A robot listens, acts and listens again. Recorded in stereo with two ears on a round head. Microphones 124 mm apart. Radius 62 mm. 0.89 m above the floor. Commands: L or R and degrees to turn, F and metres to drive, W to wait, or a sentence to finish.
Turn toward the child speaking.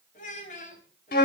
L55
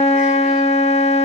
W
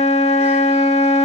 W
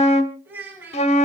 R15
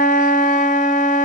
W
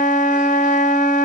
W
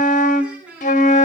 R10
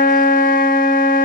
W
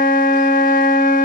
W
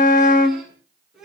Found it: a child speaking, straight ahead, over 4 m away.